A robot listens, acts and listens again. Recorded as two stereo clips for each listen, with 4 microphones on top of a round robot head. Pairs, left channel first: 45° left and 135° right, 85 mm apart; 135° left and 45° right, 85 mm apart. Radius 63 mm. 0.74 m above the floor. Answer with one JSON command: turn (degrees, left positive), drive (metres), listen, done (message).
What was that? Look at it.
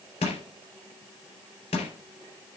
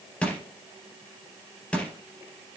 {"turn": 55}
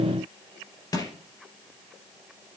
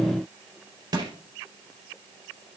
{"done": "Facing the crushing."}